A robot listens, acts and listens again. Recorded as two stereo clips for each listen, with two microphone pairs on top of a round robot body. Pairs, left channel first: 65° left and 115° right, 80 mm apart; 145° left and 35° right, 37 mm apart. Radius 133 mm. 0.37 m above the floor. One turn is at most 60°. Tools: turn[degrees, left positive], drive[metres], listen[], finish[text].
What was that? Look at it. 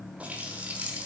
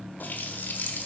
Thought: The running tap: 170° left.
Action: turn[60]
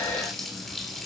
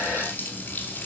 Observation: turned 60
Thought: The running tap is now 150° left.
Action: turn[60]
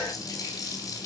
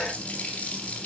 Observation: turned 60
Thought: The running tap is now 100° left.
Action: turn[60]
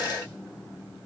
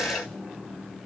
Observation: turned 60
Thought: Nothing new. It was at 40° left.
Action: turn[40]
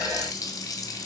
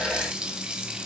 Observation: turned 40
Thought: The running tap is now 30° left.
Action: turn[30]
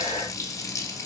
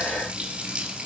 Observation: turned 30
Thought: The running tap is now 25° left.
Action: turn[25]
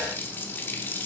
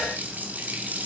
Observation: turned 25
Action: finish[Facing the running tap.]